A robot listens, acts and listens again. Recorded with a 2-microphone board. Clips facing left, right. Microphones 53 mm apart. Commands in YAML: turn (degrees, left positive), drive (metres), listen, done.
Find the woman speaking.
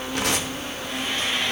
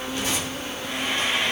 listen: true
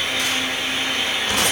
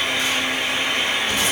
listen: true
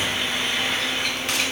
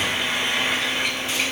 done: "I can't make out a woman speaking, only tearing paper and frying."